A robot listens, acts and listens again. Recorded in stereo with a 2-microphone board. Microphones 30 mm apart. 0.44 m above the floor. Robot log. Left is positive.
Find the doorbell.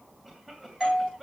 cmd yaw -30
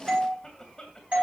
note: So it is at 140° right.
cmd yaw -140
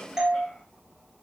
note: The doorbell is now 20° right.
cmd yaw -20
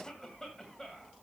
cmd idle
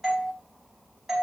end: Found it: a doorbell, straight ahead, over 4 m away.